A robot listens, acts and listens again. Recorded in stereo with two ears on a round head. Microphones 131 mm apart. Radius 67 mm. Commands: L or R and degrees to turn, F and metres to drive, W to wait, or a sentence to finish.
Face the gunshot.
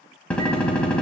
L30
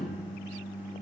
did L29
W
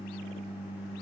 I heard a gunshot, but can't make it out now. It was about 20° right or 145° left.